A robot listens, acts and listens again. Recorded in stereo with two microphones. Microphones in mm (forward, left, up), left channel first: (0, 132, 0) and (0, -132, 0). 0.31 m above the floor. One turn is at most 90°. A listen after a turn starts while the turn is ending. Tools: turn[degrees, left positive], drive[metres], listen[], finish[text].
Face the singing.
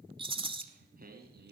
Thought: The singing: about 40° right or 140° right.
Action: turn[-40]
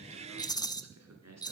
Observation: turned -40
Thought: So it is at 105° right.
Action: turn[-90]
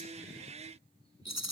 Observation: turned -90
Thought: Nothing new. It was at 15° right.
Action: turn[-15]
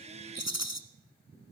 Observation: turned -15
Action: listen[]
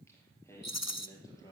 Thought: The singing is now 10° left.
Action: turn[10]
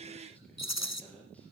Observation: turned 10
Action: finish[Found it: singing, straight ahead, over 4 m away.]